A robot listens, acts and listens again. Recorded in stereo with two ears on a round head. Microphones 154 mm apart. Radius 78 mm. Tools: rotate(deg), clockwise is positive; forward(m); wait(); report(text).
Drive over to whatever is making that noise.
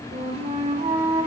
rotate(35)
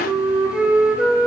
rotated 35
forward(1.0)
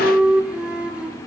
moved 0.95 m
rotate(10)
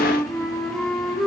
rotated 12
forward(1.0)
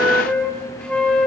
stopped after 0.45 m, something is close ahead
rotate(-10)
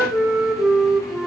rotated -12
report("I am next to the flute.")